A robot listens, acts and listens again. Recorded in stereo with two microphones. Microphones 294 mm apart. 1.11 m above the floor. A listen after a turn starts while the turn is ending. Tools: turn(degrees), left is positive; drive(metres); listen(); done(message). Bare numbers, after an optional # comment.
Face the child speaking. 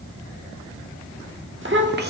# The child speaking: about 35° right or 145° right.
turn(-35)
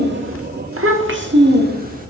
# The child speaking: about 30° right or 150° right.
turn(-30)
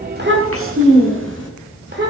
# The child speaking: about 35° right or 145° right.
turn(-35)
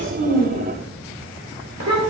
# So it is at 115° right.
turn(-115)
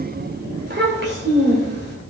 # The child speaking is now 35° right.
turn(-35)
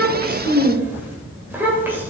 done("Facing the child speaking.")